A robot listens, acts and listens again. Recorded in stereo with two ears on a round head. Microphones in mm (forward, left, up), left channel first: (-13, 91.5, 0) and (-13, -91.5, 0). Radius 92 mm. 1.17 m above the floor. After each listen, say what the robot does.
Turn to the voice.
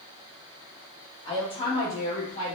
Turn 30° left.
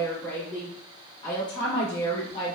Turn 25° left.
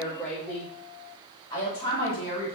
Turn 15° left.
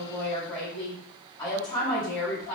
Found it: a woman speaking, straight ahead.